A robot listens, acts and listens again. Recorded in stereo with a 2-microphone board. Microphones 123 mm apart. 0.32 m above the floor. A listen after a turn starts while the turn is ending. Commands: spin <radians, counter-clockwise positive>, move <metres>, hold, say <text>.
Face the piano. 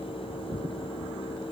hold
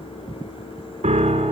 spin -1.13
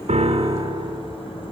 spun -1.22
spin -0.70
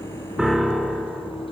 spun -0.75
say Found it: a piano, straight ahead.